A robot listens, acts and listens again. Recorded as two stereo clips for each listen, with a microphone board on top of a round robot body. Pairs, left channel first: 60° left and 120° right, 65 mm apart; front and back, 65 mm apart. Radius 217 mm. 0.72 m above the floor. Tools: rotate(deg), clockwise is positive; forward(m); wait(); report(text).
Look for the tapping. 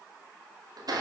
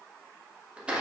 wait()
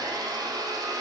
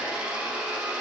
wait()
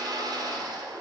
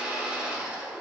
report("I can't make out tapping, only a blender.")